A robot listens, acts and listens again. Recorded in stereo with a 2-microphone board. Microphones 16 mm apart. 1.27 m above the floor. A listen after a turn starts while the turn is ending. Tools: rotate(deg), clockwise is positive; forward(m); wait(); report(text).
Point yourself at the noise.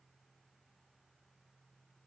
wait()
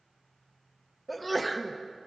rotate(-30)
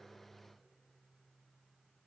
wait()
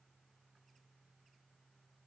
report("I heard a sneeze, but can't make it out now. It was about 15° right or 135° left.")